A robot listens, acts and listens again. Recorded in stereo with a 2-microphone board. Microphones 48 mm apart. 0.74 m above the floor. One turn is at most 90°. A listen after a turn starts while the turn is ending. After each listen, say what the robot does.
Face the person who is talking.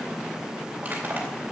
Keep listening.
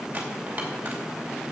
Keep listening.
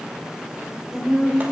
Turn 30° left.
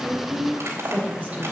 Turn 30° right.
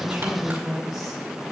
Facing the woman speaking.